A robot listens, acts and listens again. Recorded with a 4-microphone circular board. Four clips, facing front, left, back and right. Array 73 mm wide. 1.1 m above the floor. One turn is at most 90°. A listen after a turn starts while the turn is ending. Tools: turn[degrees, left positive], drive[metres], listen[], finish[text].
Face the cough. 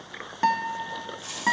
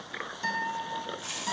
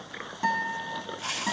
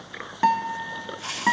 Action: listen[]
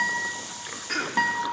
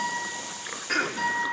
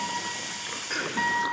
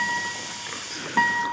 Thought: The cough: 60° left.
Action: turn[60]
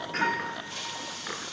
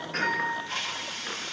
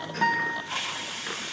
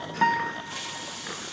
Action: listen[]
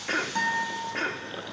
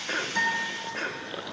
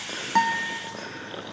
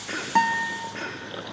Action: finish[Facing the cough.]